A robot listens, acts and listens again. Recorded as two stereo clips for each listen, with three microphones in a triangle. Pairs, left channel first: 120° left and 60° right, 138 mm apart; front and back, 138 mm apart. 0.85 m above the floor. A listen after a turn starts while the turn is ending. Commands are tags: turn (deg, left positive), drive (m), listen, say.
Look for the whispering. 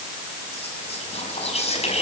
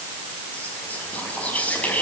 <turn deg="80"/>
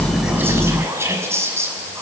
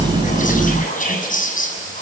<turn deg="10"/>
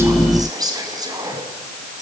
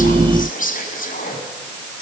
<say>Found it: whispering, straight ahead.</say>